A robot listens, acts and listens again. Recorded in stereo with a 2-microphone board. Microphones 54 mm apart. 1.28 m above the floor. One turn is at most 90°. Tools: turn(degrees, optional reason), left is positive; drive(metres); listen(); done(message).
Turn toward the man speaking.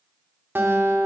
listen()
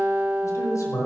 turn(degrees=90)
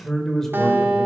turn(degrees=10, reason="So it is at 10° left.")
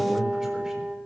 listen()
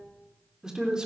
turn(degrees=-15, reason="The man speaking is now 15° right.")
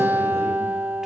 listen()
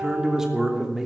turn(degrees=-10, reason="The man speaking is now 10° right.")
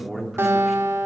done("Found it: a man speaking, straight ahead.")